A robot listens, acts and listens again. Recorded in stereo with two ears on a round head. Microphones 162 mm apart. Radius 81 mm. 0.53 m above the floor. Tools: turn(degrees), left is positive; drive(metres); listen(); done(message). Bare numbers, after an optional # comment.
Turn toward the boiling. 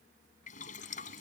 # The boiling: about 45° left or 135° left.
turn(45)
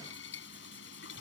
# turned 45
# So it is at 95° left.
turn(95)
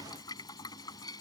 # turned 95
# The boiling is now 20° left.
turn(20)
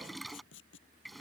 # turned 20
done("Facing the boiling.")